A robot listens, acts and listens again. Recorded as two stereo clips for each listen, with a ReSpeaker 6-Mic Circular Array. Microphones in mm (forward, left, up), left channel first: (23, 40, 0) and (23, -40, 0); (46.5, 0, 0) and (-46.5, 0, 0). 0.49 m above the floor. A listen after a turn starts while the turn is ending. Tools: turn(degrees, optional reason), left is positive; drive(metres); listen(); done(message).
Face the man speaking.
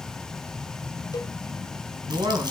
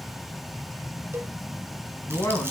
turn(degrees=-60, reason="The man speaking: 60° right.")
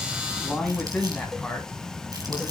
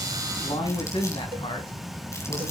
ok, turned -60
turn(degrees=10, reason="The man speaking is now 10° left.")
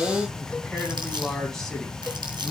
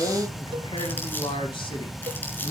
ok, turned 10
done("Facing the man speaking.")